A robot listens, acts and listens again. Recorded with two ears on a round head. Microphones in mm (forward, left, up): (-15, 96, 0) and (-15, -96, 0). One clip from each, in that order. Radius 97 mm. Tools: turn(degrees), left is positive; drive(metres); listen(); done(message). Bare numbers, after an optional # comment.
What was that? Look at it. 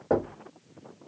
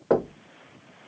# The knocking: about 75° right or 105° right.
turn(-75)
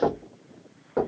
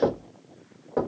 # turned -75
done("Facing the knocking.")